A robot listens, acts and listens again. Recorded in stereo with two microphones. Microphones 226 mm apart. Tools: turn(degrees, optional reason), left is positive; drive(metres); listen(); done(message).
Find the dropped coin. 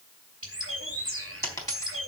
turn(degrees=30)
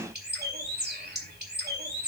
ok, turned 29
listen()
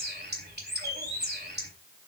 done("I heard a dropped coin, but can't make it out now. It was about 15° right or 135° left.")